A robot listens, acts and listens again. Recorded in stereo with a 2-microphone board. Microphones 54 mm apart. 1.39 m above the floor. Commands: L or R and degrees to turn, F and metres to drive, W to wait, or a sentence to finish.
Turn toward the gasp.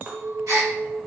R75
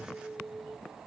W
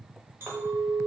I heard a gasp, but can't make it out now. It was about straight ahead or 30° right.